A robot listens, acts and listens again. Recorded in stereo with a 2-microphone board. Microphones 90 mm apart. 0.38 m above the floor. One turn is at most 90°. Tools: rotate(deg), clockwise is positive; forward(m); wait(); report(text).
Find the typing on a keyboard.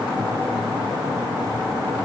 wait()
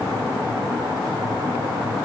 wait()
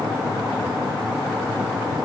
report("I can't make out typing on a keyboard.")